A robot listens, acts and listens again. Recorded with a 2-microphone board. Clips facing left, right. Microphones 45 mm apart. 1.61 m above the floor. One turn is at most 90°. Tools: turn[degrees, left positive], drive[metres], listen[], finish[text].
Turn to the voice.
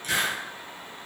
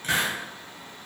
Action: listen[]
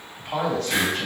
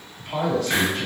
Thought: The man speaking: about 70° left or 110° left.
Action: turn[70]
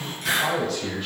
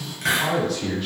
Action: finish[Facing the man speaking, 1 to 2 m away.]